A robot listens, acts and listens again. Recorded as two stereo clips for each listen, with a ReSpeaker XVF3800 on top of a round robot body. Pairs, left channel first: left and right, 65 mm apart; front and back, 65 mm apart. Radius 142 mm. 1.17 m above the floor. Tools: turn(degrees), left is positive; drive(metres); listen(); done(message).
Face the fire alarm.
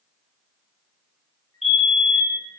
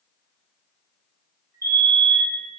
turn(degrees=-175)
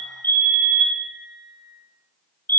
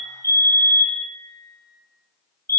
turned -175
turn(degrees=35)
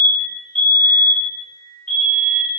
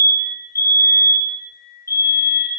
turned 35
turn(degrees=15)
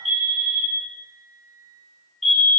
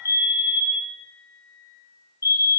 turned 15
done("Found it: a fire alarm, straight ahead, 2 to 4 m away.")